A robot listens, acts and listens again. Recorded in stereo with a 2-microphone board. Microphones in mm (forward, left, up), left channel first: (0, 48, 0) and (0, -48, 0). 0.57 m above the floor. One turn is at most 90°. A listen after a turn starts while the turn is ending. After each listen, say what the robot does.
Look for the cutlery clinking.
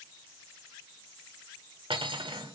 Turn 70° right.
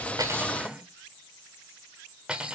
Turn 10° right.
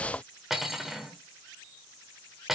Found it: cutlery clinking, straight ahead.